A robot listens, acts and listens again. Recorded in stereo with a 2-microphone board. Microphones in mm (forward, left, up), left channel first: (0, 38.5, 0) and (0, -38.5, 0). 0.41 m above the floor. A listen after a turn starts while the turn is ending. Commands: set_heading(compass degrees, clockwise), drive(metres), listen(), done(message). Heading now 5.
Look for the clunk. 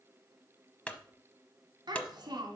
set_heading(350)
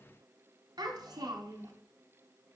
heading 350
listen()
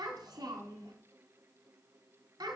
done("I heard a clunk, but can't make it out now. It was about straight ahead or 150° left.")